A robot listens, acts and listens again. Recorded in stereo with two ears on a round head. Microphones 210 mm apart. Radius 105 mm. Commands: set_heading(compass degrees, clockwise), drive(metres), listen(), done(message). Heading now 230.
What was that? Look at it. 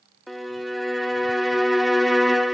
set_heading(200)
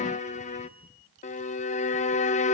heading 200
set_heading(50)
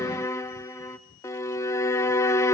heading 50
set_heading(40)
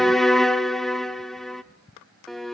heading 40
done("Found it: a violin, straight ahead.")